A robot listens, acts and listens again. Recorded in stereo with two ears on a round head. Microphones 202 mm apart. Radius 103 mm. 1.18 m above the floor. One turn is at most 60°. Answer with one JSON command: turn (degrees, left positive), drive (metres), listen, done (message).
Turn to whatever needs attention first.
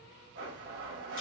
{"listen": true}
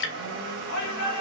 {"turn": 60}
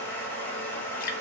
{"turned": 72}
{"listen": true}
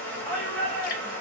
{"done": "Facing the shout, 2 to 4 m away."}